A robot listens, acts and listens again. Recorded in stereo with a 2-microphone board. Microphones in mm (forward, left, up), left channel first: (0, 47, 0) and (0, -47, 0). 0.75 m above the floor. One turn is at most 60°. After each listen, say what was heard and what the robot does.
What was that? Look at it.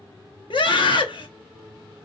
The scream: about 65° left or 115° left. Turn 60° left.
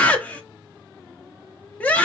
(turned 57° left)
So it is at 20° left. Turn 20° left.
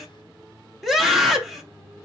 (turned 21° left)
Found it: a scream, straight ahead, 1 to 2 m away.